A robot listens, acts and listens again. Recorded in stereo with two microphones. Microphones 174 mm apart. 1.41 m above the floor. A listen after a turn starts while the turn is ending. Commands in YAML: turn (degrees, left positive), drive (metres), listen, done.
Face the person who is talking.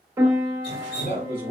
turn: 70
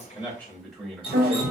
done: "Facing the man speaking."